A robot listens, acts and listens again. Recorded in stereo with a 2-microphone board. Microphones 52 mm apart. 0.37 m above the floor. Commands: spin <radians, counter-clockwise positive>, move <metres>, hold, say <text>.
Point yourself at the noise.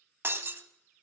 spin -0.87
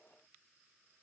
hold
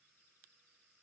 say I heard breaking glass, but can't make it out now. It was about straight ahead or 80° right.